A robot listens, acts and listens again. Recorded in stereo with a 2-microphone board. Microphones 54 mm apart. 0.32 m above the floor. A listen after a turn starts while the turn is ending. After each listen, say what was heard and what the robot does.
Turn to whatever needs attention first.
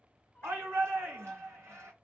The shout: about 65° right or 115° right. Turn 65° right.
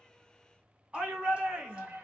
So it is at 25° right. Turn 25° right.
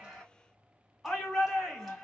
Facing the shout.